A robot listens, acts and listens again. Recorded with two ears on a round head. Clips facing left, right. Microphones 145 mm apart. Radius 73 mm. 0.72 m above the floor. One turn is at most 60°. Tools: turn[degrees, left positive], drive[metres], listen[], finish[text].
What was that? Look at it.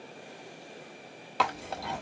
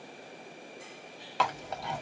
Action: turn[30]
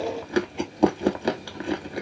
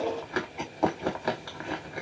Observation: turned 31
Thought: So it is at 145° left.
Action: turn[60]
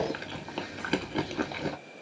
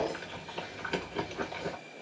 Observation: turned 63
Thought: The chewing is now 80° left.
Action: turn[60]
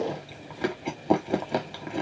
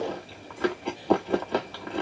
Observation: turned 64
Thought: The chewing is now 15° left.
Action: turn[15]
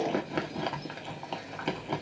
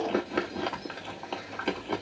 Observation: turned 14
Action: finish[Found it: chewing, straight ahead.]